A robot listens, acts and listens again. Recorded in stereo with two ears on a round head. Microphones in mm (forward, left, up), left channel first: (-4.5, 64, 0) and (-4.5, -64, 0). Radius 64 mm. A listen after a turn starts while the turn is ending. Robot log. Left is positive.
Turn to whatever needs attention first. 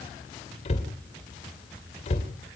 cmd idle
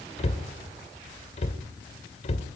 cmd idle
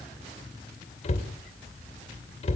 end: I can't make out anything urgent, only a cupboard door.